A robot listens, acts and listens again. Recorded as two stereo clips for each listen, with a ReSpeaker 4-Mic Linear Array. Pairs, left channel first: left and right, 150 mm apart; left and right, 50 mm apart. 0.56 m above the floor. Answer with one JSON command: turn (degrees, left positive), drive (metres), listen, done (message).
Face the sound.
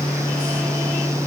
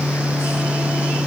{"listen": true}
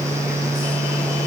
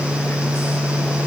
{"listen": true}
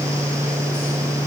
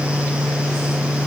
{"done": "I can't make out anything to turn to."}